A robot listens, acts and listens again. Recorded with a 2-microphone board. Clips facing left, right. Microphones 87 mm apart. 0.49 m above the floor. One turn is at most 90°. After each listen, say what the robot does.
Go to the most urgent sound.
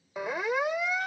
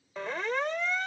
Turn 30° left.
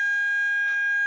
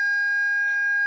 Turn 15° right.
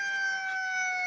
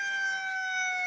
Drive 1.0 m forward.
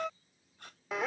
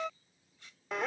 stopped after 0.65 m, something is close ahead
I am next to the siren.